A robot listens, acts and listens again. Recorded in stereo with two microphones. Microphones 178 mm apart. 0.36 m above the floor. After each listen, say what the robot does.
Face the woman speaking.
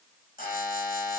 Keep listening.
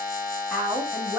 Turn 30° left.
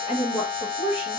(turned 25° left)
Turn 145° left.
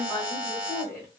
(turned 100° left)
Turn 15° left.
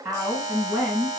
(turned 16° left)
Found it: a woman speaking, straight ahead.